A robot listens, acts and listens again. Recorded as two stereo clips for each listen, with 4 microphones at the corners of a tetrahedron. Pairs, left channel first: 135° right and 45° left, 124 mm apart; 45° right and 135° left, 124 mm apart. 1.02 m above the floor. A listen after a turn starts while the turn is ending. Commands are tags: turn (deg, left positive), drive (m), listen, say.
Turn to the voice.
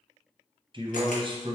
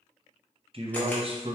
<turn deg="95"/>
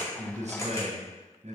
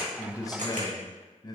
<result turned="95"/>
<turn deg="15"/>
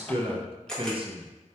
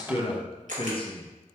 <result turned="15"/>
<say>Found it: a man speaking, straight ahead.</say>